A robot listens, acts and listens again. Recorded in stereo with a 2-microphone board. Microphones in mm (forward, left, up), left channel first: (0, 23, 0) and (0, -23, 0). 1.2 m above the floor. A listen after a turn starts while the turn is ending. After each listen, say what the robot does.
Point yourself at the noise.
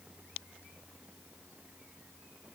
Keep listening.
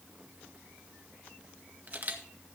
Turn 40° right.
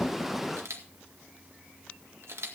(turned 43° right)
Turn 95° right.
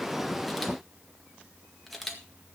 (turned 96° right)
Found it: a camera shutter, straight ahead, 1 to 2 m away.